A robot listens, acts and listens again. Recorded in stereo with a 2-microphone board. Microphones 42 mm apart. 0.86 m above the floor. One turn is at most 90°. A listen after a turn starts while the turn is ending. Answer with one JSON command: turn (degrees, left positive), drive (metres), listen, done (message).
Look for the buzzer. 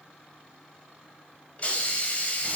{"listen": true}
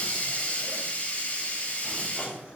{"listen": true}
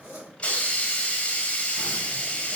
{"done": "I can't make out a buzzer to turn to."}